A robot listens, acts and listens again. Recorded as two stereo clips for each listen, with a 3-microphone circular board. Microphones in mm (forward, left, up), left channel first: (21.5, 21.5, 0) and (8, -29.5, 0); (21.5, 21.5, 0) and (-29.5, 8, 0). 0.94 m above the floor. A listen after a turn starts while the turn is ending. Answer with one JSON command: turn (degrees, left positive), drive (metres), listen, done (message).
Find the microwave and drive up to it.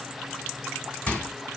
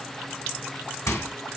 {"drive": 1.0}
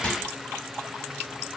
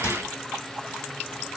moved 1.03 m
{"turn": 10}
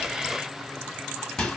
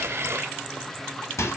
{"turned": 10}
{"drive": 1.0}
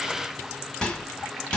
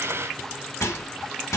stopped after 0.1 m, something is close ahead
{"done": "Arrived at the microwave, straight ahead."}